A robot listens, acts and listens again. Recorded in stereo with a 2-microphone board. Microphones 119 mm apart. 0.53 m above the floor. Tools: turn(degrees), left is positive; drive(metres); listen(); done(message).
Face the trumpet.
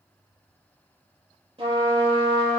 turn(degrees=-50)
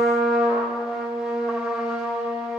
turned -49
turn(degrees=-10)
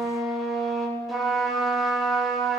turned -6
done("Found it: a trumpet, straight ahead.")